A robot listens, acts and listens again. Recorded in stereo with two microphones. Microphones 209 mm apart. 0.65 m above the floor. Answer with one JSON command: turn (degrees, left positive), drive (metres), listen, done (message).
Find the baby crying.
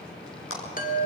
{"listen": true}
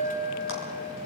{"listen": true}
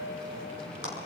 {"done": "I can't make out a baby crying to turn to."}